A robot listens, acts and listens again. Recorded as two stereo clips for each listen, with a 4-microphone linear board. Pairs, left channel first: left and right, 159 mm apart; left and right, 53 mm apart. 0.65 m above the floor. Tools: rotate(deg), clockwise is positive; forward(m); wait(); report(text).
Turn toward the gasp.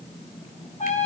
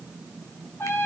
wait()
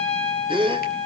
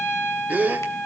rotate(35)
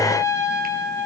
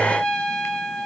wait()
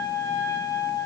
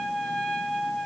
report("I heard a gasp, but can't make it out now. It was about straight ahead or 110° right.")